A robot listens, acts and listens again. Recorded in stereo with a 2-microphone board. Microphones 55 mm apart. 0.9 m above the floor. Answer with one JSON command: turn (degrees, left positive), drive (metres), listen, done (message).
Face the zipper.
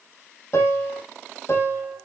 {"listen": true}
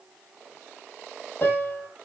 {"turn": -15}
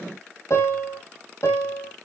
{"listen": true}
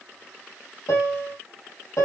{"listen": true}
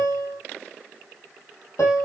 {"done": "I heard a zipper, but can't make it out now. It was about straight ahead or 150° right."}